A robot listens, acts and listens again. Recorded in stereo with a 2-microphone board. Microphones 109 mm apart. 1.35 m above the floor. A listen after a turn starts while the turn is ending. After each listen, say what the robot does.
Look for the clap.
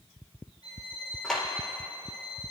Turn 30° left.
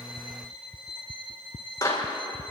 Turn 145° left.
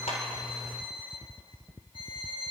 Keep listening.
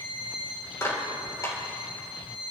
Turn 30° left.
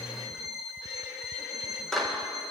Found it: a clap, straight ahead, over 4 m away.